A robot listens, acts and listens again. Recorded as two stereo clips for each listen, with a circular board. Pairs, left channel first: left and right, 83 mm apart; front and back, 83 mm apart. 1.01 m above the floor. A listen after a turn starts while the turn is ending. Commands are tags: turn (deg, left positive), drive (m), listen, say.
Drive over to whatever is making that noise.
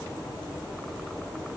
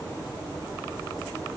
<listen/>
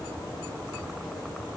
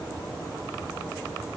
<listen/>
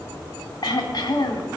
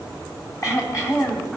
<turn deg="50"/>
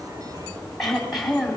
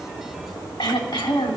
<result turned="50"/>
<drive m="1.0"/>
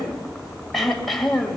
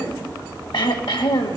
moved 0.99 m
<drive m="1.0"/>
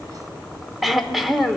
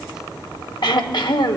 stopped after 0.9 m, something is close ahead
<say>I am next to the throat clearing.</say>